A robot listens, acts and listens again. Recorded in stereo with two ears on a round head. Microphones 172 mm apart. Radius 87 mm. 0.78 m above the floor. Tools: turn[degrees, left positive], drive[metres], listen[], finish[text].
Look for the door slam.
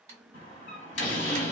Thought: The door slam: about 60° left or 120° left.
Action: turn[60]
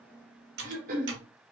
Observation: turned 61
Action: listen[]
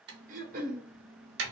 Action: finish[I heard a door slam, but can't make it out now. It was about straight ahead or 60° left.]